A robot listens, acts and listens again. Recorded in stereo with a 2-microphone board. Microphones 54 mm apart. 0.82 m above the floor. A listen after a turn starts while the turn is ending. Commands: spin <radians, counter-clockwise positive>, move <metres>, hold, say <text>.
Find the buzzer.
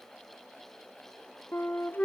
hold
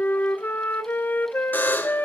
spin 0.61
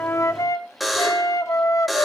say Found it: a buzzer, straight ahead.